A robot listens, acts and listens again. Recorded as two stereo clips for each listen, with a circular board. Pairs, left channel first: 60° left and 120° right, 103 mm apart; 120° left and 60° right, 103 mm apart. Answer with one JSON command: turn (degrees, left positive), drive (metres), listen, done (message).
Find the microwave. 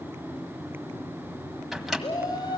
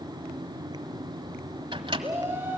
{"turn": -30}
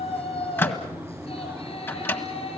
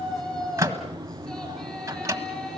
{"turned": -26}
{"done": "Facing the microwave, 1 to 2 m away."}